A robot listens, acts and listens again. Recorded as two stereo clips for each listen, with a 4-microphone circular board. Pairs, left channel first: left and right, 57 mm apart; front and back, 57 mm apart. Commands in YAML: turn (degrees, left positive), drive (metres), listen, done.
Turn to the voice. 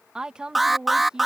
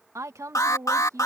turn: -165
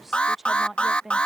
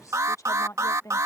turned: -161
done: "Facing the woman speaking."